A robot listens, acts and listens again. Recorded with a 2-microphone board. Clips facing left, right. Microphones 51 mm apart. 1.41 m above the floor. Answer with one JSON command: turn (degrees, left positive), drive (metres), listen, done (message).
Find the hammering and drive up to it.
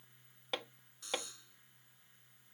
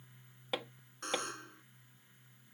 {"turn": -30}
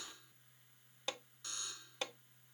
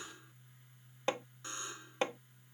{"turn": -145}
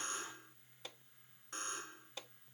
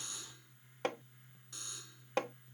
{"turn": -70}
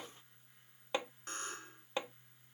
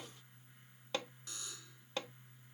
{"turn": 20}
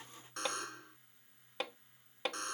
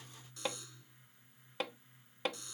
{"drive": 1.0}
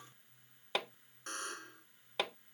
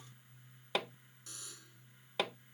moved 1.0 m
{"drive": 1.0}
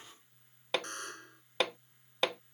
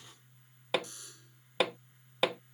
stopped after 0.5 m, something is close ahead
{"done": "Arrived at the hammering, straight ahead."}